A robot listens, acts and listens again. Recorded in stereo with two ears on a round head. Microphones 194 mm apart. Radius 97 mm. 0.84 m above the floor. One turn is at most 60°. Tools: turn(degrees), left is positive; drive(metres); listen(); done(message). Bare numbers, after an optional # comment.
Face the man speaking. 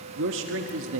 # The man speaking: about 65° right or 115° right.
turn(-60)
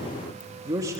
# So it is at 15° right.
turn(-15)
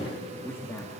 # The man speaking is now 15° left.
turn(15)
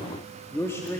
# The man speaking is now 15° left.
turn(15)
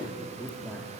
# The man speaking is now 10° left.
turn(10)
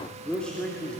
done("Facing the man speaking, 2 to 4 m away.")